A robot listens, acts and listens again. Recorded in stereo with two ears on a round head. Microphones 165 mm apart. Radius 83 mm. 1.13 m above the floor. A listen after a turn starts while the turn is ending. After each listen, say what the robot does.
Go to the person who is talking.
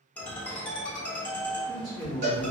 Turn 45° right.
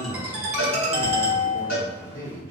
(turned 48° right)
Turn 85° right.
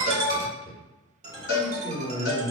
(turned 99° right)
Turn 15° left.
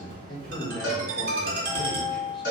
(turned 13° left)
Drive 1.0 m forward.
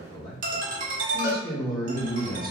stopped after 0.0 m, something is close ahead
Blocked. The man speaking is further on, straight ahead.